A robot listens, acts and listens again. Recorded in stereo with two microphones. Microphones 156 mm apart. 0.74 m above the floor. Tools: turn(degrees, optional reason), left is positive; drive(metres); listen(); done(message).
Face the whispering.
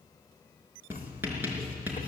listen()
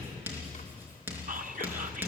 turn(degrees=-55, reason="The whispering: about 55° right or 125° right.")
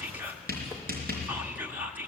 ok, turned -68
turn(degrees=-15, reason="So it is at 15° right.")
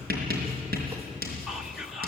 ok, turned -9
done("Found it: whispering, straight ahead.")